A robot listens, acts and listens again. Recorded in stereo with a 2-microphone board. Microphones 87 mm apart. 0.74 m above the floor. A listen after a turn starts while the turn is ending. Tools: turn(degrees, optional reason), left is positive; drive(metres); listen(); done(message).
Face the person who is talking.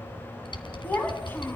turn(degrees=25, reason="The child speaking: about 25° left or 155° left.")
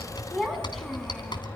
done("Found it: a child speaking, straight ahead, 2 to 4 m away.")